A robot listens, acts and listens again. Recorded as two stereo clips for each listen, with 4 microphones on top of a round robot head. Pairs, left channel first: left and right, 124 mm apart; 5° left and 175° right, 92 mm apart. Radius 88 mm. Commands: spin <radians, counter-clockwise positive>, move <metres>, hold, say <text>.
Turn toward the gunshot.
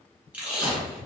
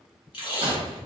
spin 2.62
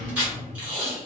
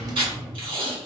say I heard a gunshot from this way, but can't make it out now.